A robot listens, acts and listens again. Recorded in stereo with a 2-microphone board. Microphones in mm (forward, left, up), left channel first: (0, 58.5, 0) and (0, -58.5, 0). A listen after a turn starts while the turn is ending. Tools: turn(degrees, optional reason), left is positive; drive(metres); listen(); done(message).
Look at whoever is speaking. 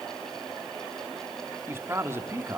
turn(degrees=-20, reason="The man speaking: about 20° right or 160° right.")
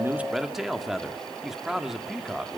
done("Found it: a man speaking, straight ahead, 1 to 2 m away.")